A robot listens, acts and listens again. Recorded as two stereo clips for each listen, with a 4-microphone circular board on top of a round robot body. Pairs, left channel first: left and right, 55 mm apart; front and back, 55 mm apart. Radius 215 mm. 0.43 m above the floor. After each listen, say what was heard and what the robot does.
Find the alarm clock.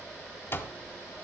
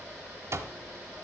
The alarm clock: 140° left. Turn 140° left.
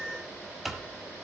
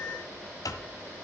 Facing the alarm clock.